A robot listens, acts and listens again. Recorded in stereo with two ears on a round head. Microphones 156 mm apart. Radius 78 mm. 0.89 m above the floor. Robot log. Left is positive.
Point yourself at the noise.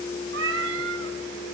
cmd yaw -90
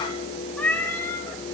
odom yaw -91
note: So it is at 10° left.
cmd yaw +10
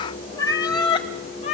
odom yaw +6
note: The cat meowing is now 40° left.
cmd yaw +40
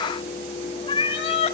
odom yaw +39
note: The cat meowing is now 35° left.
cmd yaw +35
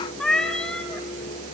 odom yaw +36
end: Found it: a cat meowing, straight ahead, 1 to 2 m away.